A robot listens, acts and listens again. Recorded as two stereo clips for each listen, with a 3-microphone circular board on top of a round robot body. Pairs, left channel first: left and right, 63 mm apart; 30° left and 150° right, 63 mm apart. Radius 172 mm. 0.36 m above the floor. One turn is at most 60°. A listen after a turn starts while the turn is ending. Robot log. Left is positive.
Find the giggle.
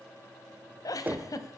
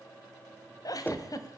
note: The giggle: 60° left.
cmd yaw +60
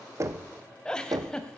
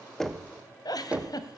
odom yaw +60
note: The giggle is now 10° left.
cmd yaw +10
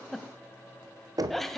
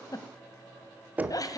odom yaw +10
end: Found it: a giggle, straight ahead.